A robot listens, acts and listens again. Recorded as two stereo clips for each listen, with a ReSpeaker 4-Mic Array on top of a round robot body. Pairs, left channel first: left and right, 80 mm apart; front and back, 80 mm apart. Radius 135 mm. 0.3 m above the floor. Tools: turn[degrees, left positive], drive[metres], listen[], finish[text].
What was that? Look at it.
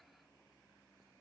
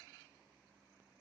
Action: listen[]
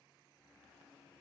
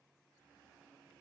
Action: listen[]
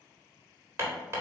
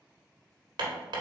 Thought: The hammering: 145° right.
Action: turn[-145]
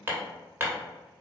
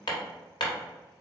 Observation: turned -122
Thought: The hammering is now 25° right.
Action: turn[-25]
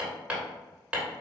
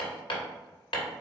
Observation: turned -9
Thought: The hammering is now 15° right.
Action: turn[-15]
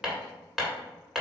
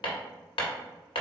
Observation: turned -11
Action: finish[Found it: hammering, straight ahead.]